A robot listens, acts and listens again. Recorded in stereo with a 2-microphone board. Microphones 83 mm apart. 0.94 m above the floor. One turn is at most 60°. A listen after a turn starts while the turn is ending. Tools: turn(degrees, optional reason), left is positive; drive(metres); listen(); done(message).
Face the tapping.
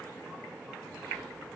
listen()
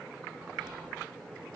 listen()
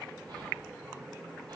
done("I can't make out tapping, only whispering.")